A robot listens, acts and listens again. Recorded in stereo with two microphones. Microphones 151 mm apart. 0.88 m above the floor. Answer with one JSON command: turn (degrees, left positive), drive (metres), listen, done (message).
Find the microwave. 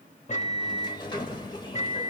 {"turn": 50}
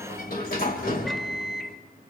{"done": "Facing the microwave, 1 to 2 m away."}